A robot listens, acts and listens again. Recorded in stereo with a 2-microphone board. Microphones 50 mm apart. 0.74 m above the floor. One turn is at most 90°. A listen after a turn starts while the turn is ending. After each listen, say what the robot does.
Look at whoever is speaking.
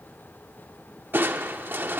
Keep listening.
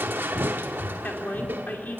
Turn 40° left.
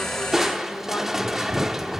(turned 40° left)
Keep listening.
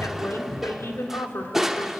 Turn 90° left.
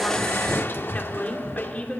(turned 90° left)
Turn 35° left.
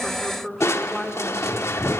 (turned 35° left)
Facing the woman speaking.